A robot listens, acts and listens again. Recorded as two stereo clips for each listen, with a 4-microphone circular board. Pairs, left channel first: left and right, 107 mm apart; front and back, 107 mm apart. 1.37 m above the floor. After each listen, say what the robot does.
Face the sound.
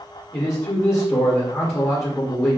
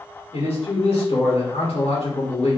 Turn 25° left.
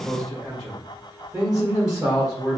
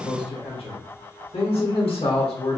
Turn 10° right.
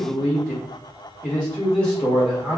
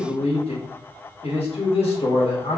Facing the man speaking.